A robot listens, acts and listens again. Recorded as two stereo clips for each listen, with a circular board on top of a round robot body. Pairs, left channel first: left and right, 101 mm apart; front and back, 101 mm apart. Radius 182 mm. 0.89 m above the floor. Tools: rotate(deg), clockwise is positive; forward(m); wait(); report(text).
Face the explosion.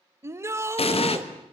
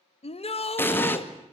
rotate(-70)
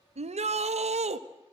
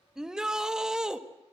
report("Facing where the explosion came from. I can't hear it now.")